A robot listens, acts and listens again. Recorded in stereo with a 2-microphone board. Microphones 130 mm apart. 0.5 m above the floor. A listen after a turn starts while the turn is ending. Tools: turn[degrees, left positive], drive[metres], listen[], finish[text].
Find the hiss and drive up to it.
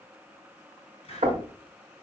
Thought: The hiss: about 50° left or 130° left.
Action: turn[50]
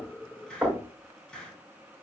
Action: drive[1.0]
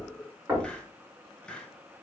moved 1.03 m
Thought: The hiss is now 10° left.
Action: turn[10]
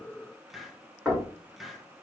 Action: drive[1.0]
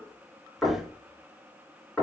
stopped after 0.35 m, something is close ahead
Action: listen[]
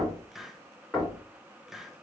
Action: finish[I am next to the hiss.]